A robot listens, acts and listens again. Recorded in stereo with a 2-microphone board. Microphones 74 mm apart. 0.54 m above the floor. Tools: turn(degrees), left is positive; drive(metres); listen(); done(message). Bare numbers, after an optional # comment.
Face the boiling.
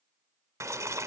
# The boiling: about 40° right or 140° right.
turn(-40)
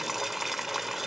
done("Found it: boiling, straight ahead.")